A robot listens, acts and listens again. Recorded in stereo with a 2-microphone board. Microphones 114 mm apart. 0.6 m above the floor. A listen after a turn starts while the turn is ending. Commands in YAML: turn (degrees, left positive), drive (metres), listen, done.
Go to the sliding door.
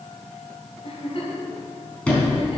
turn: 30
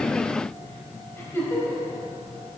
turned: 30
listen: true
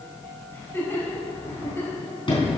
turn: 135
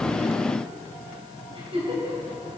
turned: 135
listen: true
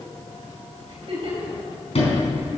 turn: 60
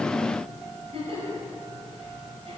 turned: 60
listen: true
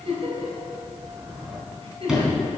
drive: 1.0
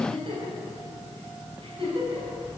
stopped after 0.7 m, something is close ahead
listen: true
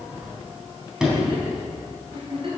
done: "Something is in my way. I am facing the sliding door but have not reached it."